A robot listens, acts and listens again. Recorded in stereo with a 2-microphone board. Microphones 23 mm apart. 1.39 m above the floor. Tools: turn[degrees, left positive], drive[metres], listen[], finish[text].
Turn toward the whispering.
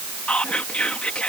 Thought: The whispering: about 65° left or 115° left.
Action: turn[65]
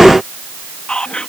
Thought: So it is at 50° left.
Action: turn[50]
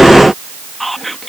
Thought: The whispering is now 10° left.
Action: turn[10]
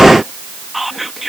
Action: finish[Found it: whispering, straight ahead.]